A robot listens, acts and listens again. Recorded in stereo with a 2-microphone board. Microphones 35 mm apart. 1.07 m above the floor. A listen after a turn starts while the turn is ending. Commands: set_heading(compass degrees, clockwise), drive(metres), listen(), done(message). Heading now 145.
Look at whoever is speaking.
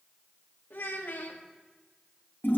set_heading(75)
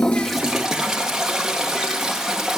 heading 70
listen()
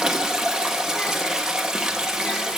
listen()
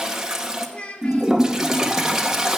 set_heading(35)
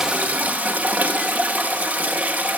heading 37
listen()
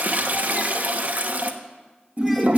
listen()
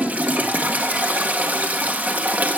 done("I heard a child speaking from this way, but can't make it out now.")